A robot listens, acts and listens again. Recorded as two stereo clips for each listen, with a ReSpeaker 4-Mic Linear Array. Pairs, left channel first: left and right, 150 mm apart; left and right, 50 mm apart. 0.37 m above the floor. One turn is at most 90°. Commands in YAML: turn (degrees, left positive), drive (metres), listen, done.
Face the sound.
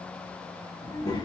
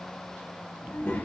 turn: 30
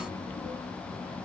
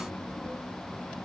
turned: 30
turn: 40
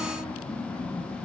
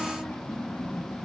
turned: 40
turn: 90
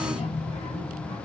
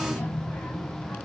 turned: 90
turn: 55
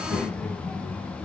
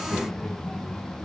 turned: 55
turn: 10
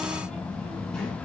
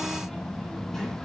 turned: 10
done: "Found it: a child speaking, straight ahead."